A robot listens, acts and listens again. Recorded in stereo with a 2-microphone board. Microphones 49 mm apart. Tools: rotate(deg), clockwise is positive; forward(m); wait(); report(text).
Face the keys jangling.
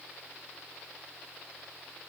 wait()
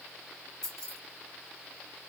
rotate(-30)
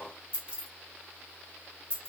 rotate(20)
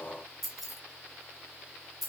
report("Found it: keys jangling, straight ahead, under 1 m away.")